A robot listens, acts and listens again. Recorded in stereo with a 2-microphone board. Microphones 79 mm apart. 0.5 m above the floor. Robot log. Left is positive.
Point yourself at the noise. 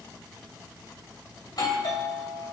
note: The doorbell: about 60° left or 120° left.
cmd yaw +60
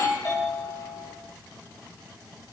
note: So it is at 50° left.
cmd yaw +50
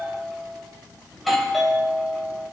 end: Facing the doorbell, 2 to 4 m away.